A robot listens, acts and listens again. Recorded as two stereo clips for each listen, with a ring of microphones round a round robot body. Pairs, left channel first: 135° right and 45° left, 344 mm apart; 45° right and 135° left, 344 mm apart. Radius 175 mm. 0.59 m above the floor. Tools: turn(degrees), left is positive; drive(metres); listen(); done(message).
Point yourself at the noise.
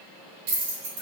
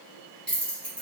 turn(degrees=45)
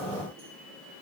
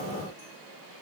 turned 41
listen()
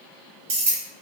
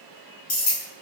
done("Facing the keys jangling.")